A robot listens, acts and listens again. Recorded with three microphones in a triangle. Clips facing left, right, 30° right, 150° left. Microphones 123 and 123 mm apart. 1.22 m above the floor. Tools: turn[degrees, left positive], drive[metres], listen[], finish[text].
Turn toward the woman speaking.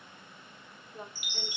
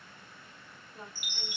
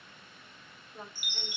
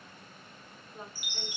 Thought: The woman speaking: 60° left.
Action: turn[60]
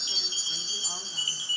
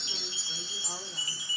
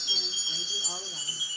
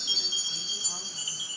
Action: listen[]
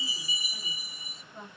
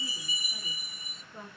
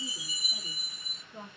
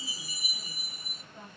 Action: finish[Found it: a woman speaking, straight ahead, 1 to 2 m away.]